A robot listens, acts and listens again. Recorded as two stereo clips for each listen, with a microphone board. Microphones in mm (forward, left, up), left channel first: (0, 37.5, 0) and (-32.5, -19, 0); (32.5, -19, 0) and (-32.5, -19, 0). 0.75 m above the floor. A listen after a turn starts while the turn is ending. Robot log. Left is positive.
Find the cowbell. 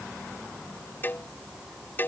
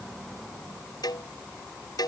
end: Found it: a cowbell, straight ahead.